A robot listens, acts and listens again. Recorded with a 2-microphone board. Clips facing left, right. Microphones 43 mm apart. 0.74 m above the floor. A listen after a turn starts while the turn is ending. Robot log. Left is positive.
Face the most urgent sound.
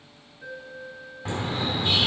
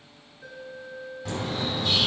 note: The alarm: about 40° left or 140° left.
cmd yaw +40
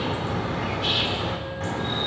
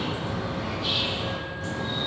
cmd idle
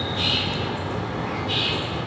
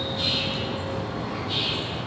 cmd idle
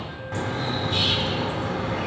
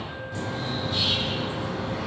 end: I heard an alarm, but can't make it out now. It was about straight ahead or 100° left.